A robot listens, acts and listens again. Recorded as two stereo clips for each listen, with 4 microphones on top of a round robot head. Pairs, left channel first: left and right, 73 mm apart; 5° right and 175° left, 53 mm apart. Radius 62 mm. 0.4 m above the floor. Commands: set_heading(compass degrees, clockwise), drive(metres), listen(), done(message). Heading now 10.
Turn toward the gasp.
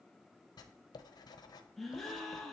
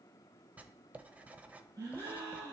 set_heading(190)
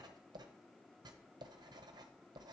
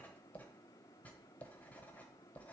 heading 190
done("Facing where the gasp came from. I can't hear it now.")